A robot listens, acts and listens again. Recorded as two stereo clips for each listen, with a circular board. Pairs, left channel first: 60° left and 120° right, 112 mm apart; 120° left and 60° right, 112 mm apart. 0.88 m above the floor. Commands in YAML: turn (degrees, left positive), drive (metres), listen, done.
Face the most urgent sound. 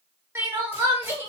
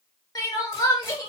turn: 170
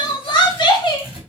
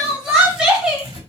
turn: 20
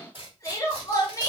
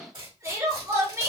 done: "Found it: crying, straight ahead, under 1 m away."